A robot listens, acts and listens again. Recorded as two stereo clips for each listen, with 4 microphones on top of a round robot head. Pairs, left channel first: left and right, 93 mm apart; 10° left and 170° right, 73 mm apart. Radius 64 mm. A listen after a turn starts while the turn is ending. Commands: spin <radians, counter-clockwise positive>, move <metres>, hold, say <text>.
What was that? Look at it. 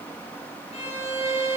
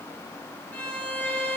spin 1.40
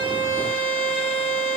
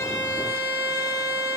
spin 0.26
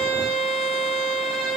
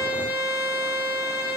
say Found it: a violin, straight ahead.